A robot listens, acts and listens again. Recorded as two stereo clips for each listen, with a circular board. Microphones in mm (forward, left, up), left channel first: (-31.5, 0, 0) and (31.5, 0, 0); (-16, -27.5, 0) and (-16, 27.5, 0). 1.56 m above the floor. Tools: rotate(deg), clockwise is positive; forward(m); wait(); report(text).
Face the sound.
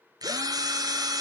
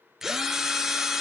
report("Facing the drill.")